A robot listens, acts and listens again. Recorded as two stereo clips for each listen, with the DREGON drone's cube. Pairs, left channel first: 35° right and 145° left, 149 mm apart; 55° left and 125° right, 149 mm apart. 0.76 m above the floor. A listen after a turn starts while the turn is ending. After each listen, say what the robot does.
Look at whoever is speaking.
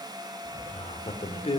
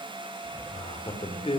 Turn 10° left.
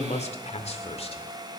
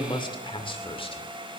Found it: a man speaking, straight ahead, 2 to 4 m away.